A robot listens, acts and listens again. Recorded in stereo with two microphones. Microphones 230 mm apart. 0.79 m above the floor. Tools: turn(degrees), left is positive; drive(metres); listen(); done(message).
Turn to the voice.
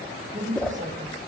turn(degrees=-30)
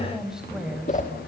done("Found it: a woman speaking, straight ahead, over 4 m away.")